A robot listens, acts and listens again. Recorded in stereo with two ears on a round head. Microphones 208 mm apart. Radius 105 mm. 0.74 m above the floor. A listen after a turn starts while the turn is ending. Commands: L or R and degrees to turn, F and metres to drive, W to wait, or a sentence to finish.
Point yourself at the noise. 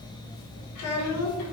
L75
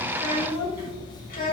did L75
L40
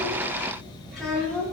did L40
L10
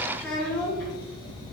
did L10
L10
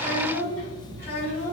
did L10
L10
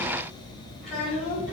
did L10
Facing the child speaking, 2 to 4 m away.